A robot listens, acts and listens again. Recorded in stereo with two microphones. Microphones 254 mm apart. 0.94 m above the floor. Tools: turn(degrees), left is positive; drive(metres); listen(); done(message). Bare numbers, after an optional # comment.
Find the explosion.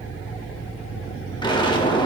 # The explosion: about 20° left or 160° left.
turn(20)
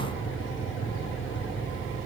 listen()
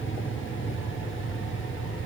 done("I heard an explosion, but can't make it out now. It was about straight ahead or 140° left.")